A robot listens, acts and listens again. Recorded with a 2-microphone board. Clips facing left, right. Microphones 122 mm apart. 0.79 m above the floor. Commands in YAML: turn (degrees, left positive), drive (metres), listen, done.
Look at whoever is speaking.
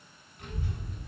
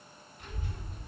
turn: 65
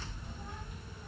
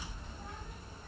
done: "Found it: a child speaking, straight ahead."